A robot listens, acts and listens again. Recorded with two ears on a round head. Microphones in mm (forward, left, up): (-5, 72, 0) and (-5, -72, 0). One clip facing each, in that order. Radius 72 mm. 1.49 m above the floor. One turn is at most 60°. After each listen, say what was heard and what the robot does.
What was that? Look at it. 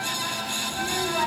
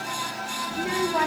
The child speaking: about 75° right or 105° right. Turn 60° right.
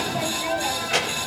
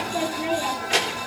So it is at 40° right. Turn 40° right.
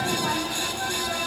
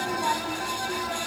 Keep listening.
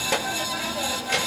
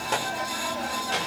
The child speaking is now 15° left. Turn 15° left.
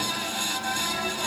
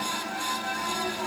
Keep listening.
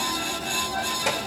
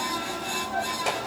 Keep listening.
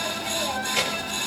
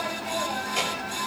Facing where the child speaking came from. I can't hear it now.